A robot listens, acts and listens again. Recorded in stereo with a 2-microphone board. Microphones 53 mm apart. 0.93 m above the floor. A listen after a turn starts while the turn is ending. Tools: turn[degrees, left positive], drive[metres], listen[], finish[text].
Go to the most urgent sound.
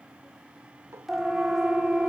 Action: turn[-30]
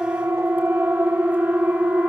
Thought: So it is at 145° right.
Action: turn[-145]
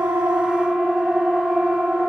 Thought: The siren is now 10° right.
Action: turn[-10]
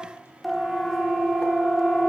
Action: drive[1.0]
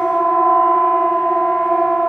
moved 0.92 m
Action: drive[1.0]
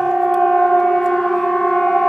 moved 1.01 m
Action: drive[1.0]
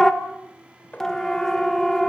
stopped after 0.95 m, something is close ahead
Thought: The siren is now 15° left.
Action: turn[15]
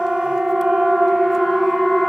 Action: finish[Arrived at the siren, straight ahead.]